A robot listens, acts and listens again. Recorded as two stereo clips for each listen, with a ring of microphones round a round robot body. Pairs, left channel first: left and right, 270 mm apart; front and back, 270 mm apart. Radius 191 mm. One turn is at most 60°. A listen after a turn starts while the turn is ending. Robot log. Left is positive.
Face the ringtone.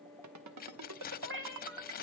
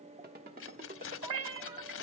note: The ringtone: 115° right.
cmd yaw -60
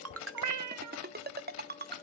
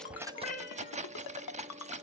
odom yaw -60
note: The ringtone is now 35° right.
cmd yaw -35
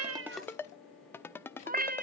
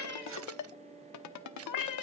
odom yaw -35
note: The ringtone is now 10° left.
cmd yaw +10
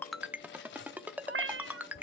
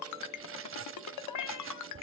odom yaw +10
end: Found it: a ringtone, straight ahead.